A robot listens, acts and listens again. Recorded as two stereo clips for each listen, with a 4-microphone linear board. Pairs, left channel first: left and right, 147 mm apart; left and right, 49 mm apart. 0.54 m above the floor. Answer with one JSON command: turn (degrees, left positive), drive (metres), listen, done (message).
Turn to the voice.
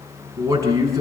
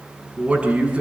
{"turn": -25}
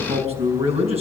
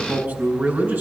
{"turn": -135}
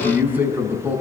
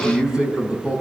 {"turn": -15}
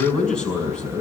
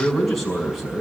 {"done": "Facing the man speaking."}